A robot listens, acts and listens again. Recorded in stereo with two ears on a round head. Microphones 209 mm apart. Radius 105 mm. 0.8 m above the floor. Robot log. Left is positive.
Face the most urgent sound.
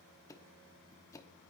cmd idle
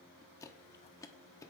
cmd idle
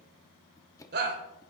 note: The shout: about 45° right or 135° right.
cmd yaw -45
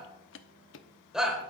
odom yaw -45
end: Facing the shout.